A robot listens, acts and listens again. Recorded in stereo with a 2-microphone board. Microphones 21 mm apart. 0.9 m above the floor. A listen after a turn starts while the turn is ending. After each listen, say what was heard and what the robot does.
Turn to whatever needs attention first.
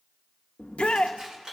The shout: about 65° left or 115° left. Turn 65° left.
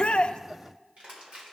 Keep listening.
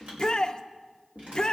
So it is at 35° left. Turn 35° left.
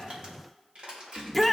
Facing the shout.